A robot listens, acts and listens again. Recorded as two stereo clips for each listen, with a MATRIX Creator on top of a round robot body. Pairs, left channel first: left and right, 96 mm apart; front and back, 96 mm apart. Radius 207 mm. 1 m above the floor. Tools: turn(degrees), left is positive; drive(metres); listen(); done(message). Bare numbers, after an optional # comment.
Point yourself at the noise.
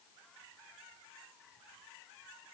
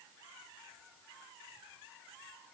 listen()
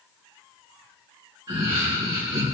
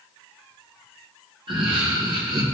# The laughter: 135° right.
turn(-135)
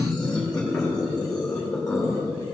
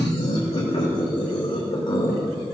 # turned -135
# The laughter is now 25° left.
turn(25)
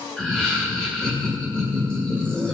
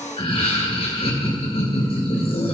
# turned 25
done("Found it: laughter, straight ahead.")